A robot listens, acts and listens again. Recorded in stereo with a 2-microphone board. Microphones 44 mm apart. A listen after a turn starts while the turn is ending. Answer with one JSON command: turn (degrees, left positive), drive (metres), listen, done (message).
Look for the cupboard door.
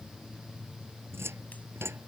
{"turn": -90}
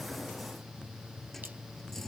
{"turn": 10}
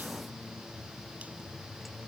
{"listen": true}
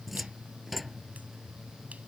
{"done": "Facing the cupboard door."}